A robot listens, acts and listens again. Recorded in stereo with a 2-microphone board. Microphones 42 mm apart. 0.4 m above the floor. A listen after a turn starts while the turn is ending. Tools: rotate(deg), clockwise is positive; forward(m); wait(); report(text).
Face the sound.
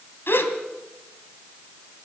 rotate(-60)
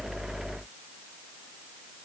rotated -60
wait()
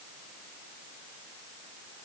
report("I heard a gasp, but can't make it out now. It was about straight ahead or 60° left.")